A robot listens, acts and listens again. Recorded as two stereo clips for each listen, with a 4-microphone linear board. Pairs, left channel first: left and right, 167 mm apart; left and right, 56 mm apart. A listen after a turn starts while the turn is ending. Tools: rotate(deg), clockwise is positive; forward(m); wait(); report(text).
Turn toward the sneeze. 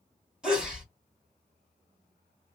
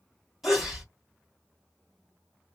rotate(30)
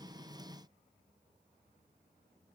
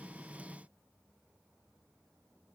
wait()
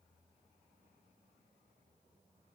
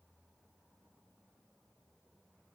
report("I heard a sneeze, but can't make it out now. It was about 25° left or 145° right.")